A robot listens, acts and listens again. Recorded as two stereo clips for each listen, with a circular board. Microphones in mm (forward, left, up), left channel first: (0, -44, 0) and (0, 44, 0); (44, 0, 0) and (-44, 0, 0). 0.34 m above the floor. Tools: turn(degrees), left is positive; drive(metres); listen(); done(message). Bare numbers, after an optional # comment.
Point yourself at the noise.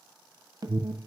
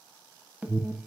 # The alarm: 110° left.
turn(110)
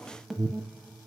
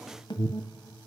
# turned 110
done("Found it: an alarm, straight ahead.")